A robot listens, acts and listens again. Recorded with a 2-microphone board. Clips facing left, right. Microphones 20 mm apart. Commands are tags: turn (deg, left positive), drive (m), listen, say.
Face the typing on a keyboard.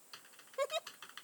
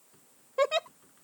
<turn deg="90"/>
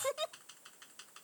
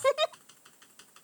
<say>Found it: typing on a keyboard, straight ahead.</say>